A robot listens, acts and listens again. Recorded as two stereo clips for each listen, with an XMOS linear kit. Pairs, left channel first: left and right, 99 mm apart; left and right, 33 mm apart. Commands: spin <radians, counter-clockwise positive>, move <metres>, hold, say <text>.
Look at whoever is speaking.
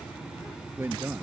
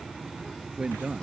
spin -0.44
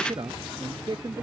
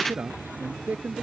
spin -2.27
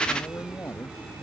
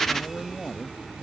spin 0.44
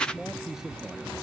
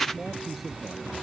say Facing the man speaking.